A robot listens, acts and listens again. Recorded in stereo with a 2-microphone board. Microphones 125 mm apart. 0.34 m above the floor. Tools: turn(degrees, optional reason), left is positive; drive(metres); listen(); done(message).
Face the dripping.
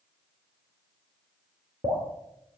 turn(degrees=-45, reason="The dripping: about 45° right or 135° right.")
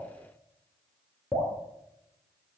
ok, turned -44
done("Facing the dripping, 2 to 4 m away.")